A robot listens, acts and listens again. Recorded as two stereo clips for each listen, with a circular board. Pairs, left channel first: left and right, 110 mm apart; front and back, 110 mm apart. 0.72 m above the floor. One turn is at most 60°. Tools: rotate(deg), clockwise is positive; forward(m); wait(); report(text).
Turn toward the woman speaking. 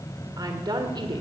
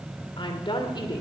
rotate(45)
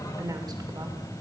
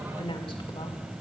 rotate(35)
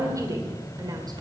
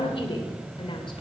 rotate(35)
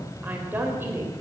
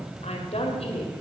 rotate(20)
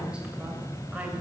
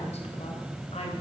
wait()
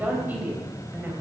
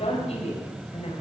rotate(15)
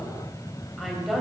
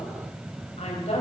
report("Facing the woman speaking, 2 to 4 m away.")